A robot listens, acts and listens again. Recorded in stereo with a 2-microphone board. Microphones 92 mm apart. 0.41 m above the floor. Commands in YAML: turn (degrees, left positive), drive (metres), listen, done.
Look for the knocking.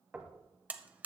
turn: -15
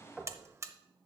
done: "Facing the knocking, 1 to 2 m away."